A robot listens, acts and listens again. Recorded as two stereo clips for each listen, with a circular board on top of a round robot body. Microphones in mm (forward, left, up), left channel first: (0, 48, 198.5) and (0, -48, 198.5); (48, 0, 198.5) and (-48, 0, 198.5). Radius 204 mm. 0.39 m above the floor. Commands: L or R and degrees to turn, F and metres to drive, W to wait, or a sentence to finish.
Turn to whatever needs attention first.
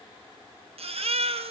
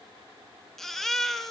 R85
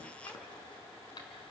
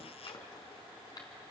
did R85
W
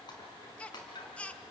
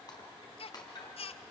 L10
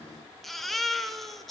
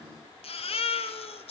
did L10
Facing the baby crying, under 1 m away.